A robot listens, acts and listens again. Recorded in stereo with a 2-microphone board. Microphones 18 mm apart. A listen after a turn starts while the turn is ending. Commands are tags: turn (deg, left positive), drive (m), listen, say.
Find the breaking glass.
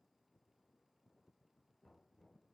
<listen/>
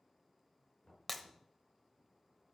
<turn deg="30"/>
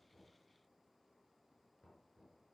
<listen/>
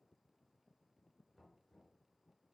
<say>I heard breaking glass, but can't make it out now. It was about 25° right or 145° left.</say>